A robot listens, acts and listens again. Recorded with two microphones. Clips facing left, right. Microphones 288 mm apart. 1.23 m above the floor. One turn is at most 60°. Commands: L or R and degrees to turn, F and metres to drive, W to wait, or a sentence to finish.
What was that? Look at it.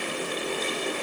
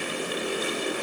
W
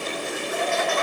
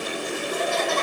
R50
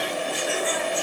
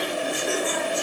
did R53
R55
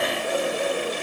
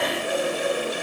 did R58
W
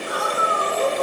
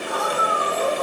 L30
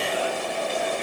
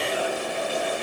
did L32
W
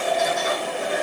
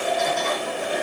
L10
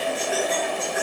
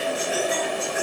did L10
Facing the laughter, 2 to 4 m away.